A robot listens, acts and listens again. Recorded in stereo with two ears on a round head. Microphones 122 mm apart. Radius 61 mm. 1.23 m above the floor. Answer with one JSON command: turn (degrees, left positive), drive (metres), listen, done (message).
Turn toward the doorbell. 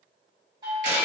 {"turn": -35}
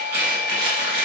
{"turn": -110}
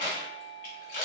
{"turn": 25}
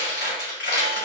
{"listen": true}
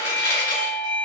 {"done": "Found it: a doorbell, straight ahead."}